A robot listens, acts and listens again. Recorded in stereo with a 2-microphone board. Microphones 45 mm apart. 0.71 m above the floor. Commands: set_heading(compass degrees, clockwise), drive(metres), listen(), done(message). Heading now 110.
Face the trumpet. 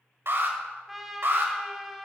set_heading(140)
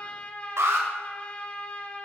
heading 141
set_heading(111)
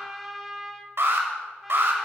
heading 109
done("Facing the trumpet, 1 to 2 m away.")